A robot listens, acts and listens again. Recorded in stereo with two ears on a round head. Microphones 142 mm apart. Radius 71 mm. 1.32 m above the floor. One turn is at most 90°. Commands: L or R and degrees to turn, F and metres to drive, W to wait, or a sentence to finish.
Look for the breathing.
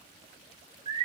W
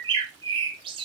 W
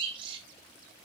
I can't make out breathing, only a bird.